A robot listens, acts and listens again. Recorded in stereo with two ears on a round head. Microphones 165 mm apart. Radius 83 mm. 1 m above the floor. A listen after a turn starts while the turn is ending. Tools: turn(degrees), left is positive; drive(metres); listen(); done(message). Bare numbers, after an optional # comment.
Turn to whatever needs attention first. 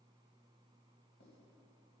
listen()
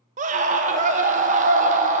# The scream: about 40° right or 140° right.
turn(-40)
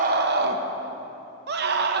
# So it is at 95° right.
turn(-95)
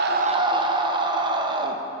# The scream is now 30° right.
turn(-30)
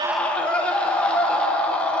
# The scream is now 10° left.
turn(10)
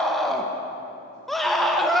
done("Found it: a scream, straight ahead.")